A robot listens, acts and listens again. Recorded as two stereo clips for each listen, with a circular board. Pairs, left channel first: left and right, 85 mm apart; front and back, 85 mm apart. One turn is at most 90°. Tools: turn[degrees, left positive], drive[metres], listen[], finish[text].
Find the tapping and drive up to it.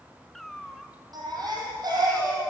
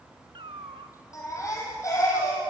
Action: listen[]
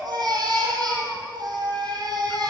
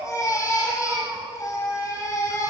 Action: listen[]
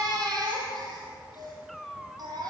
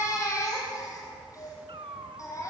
Action: finish[I can't make out tapping, only a cat meowing and a baby crying.]